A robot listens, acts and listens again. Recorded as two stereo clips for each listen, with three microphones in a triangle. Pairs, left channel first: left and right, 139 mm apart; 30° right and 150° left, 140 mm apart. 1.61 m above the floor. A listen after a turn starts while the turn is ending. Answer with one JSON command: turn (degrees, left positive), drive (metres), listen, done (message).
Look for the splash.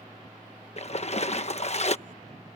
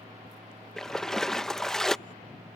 {"turn": 55}
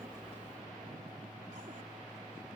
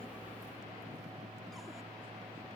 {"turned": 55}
{"done": "I heard a splash from this way, but can't make it out now."}